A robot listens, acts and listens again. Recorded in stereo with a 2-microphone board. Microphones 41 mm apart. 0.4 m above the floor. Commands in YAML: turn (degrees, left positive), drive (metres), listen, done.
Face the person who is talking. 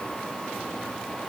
listen: true
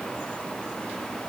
listen: true
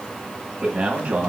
turn: -35
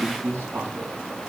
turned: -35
turn: -110
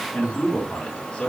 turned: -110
turn: 15
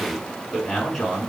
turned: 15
done: "Facing the man speaking."